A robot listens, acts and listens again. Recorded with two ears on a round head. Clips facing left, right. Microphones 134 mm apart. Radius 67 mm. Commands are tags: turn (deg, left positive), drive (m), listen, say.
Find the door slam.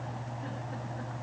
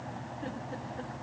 <listen/>
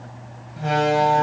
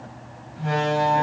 <turn deg="70"/>
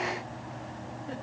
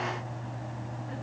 <listen/>
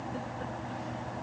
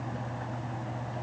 <say>I heard a door slam, but can't make it out now. It was about straight ahead or 40° left.</say>